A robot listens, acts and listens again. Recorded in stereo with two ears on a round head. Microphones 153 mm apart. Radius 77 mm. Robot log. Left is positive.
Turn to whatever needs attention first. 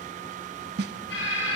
note: The alarm: about 70° left or 110° left.
cmd yaw +70
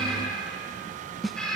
end: Found it: an alarm, straight ahead, over 4 m away.